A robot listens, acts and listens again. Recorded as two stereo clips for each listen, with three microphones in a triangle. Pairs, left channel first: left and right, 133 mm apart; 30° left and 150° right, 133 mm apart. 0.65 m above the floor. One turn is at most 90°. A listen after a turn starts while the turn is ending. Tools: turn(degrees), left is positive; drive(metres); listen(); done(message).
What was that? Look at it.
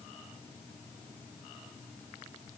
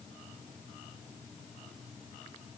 listen()
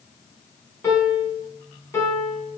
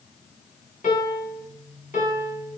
turn(degrees=20)
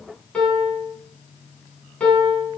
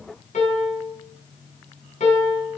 turn(degrees=10)
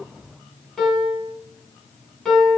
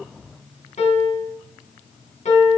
done("Found it: a piano, straight ahead, 2 to 4 m away.")